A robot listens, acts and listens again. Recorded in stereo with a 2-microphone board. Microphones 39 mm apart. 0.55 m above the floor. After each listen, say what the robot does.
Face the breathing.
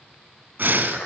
Turn 55° right.
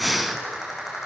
Facing the breathing.